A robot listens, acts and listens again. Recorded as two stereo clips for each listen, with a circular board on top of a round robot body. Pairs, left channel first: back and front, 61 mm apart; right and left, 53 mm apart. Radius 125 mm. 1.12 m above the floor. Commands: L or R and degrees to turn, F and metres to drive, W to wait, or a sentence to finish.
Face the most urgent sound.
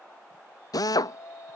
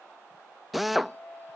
R140
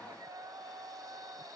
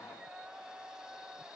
L15
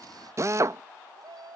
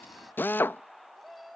Found it: a shout, straight ahead.